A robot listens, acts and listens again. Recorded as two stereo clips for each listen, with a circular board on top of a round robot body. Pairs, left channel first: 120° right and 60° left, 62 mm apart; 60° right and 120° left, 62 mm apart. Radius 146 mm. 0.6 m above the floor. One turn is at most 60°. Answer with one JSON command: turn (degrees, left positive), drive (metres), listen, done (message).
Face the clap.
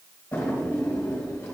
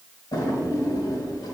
{"listen": true}
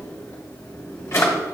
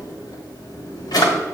{"listen": true}
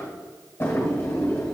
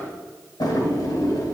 {"done": "I can't make out a clap to turn to."}